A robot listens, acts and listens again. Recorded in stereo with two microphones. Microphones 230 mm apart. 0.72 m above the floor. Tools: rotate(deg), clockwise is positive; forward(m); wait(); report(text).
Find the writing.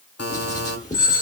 rotate(-30)
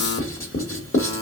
rotate(-120)
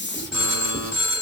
report("Found it: writing, straight ahead.")